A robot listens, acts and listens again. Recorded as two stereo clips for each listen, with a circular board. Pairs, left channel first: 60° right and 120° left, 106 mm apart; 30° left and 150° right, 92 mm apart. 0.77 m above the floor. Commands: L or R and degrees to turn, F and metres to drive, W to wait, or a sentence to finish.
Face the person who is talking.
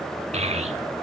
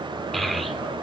L120
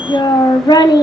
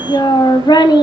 R10
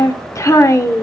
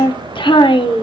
Facing the child speaking.